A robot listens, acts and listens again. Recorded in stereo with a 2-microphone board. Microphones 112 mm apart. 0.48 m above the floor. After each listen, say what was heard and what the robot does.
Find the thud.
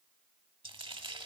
Keep listening.
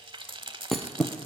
Turn 30° left.
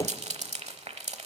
So it is at 150° left. Turn 150° left.
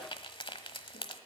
I heard a thud from this way, but can't make it out now.